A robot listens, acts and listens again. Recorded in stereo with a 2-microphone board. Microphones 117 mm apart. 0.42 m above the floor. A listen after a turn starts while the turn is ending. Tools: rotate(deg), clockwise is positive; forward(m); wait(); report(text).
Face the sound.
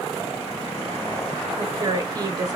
rotate(35)
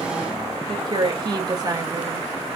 rotate(35)
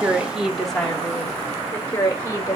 rotate(-20)
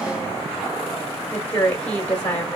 rotate(-10)
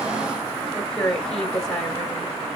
report("Found it: a woman speaking, straight ahead.")